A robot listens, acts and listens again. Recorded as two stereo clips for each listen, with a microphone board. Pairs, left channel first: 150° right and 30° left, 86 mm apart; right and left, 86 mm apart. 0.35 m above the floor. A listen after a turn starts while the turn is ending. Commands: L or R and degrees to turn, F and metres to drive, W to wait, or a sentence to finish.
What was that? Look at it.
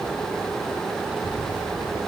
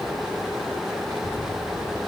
L105
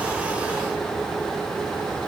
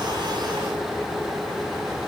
W
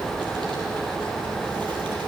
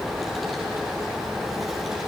Found it: a child speaking, straight ahead.